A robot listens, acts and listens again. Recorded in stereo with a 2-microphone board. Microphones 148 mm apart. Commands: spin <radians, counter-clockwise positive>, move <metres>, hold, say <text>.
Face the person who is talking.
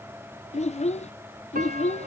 spin 0.79
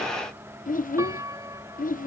spin 1.40
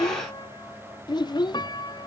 spin 0.52
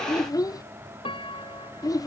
spin 0.44
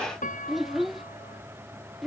say Found it: a child speaking, straight ahead.